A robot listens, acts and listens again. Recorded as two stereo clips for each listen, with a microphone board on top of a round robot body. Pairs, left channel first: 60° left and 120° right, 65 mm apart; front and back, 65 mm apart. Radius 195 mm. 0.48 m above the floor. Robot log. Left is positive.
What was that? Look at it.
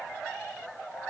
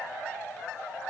cmd idle
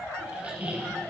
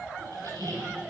note: The squeak: 175° left.
cmd yaw +175
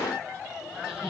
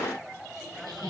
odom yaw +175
note: The squeak is now 10° left.
cmd yaw +10
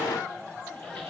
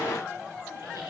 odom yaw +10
cmd idle
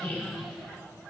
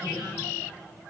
end: Found it: a squeak, straight ahead, 2 to 4 m away.